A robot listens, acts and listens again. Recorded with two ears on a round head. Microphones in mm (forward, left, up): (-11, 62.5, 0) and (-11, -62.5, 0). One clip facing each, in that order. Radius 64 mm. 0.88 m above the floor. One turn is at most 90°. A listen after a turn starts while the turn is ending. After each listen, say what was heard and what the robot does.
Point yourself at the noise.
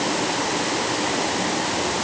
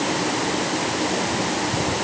Keep listening.
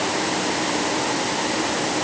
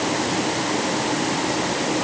Keep listening.
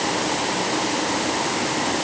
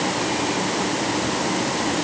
I can't make out anything to turn to.